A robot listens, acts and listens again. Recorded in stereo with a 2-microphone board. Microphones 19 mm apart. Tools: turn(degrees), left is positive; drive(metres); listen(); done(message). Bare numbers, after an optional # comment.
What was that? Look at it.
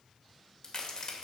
# The crack: about 35° left or 145° left.
turn(35)
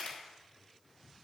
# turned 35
# So it is at 110° left.
turn(110)
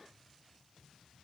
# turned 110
done("I heard a crack from this way, but can't make it out now.")